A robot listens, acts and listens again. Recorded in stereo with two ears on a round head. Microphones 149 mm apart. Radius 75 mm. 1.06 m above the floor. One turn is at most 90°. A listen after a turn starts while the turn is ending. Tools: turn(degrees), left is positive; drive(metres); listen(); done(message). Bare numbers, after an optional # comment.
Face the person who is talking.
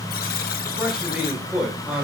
turn(-30)
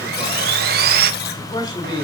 # So it is at 25° left.
turn(25)
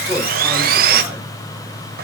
listen()
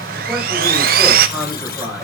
done("Found it: a man speaking, straight ahead, over 4 m away.")